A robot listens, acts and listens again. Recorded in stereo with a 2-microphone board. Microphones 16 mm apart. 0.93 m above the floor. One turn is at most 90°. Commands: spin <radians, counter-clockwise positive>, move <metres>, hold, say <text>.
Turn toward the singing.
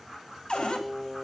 spin -0.52
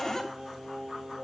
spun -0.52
spin -1.57
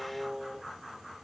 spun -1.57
say Facing the singing, over 4 m away.